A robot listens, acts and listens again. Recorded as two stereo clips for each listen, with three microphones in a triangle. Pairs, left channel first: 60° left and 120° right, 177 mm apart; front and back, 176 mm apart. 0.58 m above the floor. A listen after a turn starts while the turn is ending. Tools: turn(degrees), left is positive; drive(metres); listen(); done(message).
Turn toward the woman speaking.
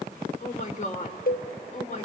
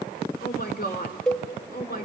turn(degrees=20)
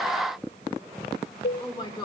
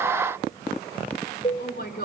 done("Found it: a woman speaking, straight ahead.")